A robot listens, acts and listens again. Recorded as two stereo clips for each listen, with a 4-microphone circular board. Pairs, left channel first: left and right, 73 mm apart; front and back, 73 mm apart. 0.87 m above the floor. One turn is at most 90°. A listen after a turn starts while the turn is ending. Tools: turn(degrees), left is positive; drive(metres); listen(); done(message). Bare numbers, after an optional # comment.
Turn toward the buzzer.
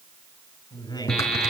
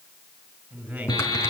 # The buzzer: 10° left.
turn(10)
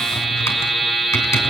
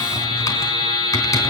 done("Found it: a buzzer, straight ahead, 2 to 4 m away.")